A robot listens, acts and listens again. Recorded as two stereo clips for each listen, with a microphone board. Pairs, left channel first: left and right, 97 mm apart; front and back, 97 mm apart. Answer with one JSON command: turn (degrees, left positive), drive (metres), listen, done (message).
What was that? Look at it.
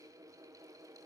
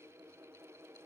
{"listen": true}
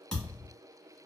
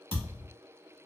{"turn": 10}
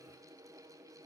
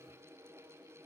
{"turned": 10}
{"done": "Facing where the thud came from. I can't hear it now."}